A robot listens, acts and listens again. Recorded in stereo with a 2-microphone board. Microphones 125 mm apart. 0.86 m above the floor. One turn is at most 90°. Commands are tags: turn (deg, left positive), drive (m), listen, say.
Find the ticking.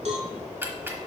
<turn deg="-15"/>
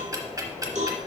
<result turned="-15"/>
<turn deg="-90"/>
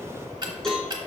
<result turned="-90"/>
<turn deg="-45"/>
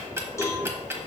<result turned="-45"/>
<turn deg="-25"/>
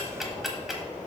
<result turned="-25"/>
<say>Found it: ticking, straight ahead, 1 to 2 m away.</say>